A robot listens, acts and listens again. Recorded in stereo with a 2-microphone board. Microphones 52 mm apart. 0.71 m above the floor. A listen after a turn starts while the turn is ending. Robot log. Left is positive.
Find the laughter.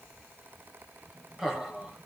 note: The laughter: about 15° right or 165° right.
cmd yaw -15
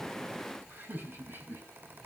note: So it is at 135° right.
cmd yaw -135
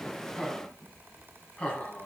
note: The laughter is now 25° left.
cmd yaw +25
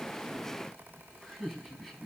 end: Facing the laughter.